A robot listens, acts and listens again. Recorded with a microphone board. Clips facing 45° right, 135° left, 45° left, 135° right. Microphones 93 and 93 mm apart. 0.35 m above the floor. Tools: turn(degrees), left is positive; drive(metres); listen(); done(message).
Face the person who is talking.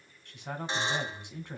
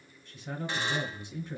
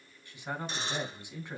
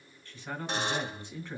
turn(degrees=-30)
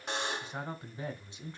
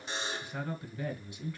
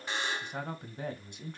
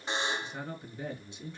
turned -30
turn(degrees=15)
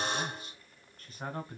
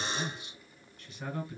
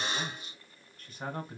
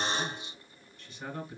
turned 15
done("Facing the man speaking, 2 to 4 m away.")